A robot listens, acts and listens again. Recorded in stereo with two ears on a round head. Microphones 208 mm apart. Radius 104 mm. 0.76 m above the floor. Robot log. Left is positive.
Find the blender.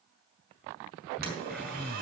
cmd idle
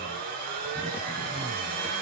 note: The blender: about 40° right or 140° right.
cmd yaw -40
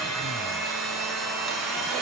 end: Facing the blender.